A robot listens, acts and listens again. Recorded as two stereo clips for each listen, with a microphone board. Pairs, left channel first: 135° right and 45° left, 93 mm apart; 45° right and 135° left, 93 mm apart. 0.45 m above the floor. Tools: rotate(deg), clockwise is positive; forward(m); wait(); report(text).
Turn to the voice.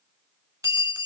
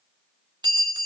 wait()
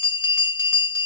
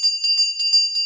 wait()
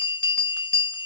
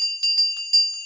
report("I can't make out anyone speaking to turn to.")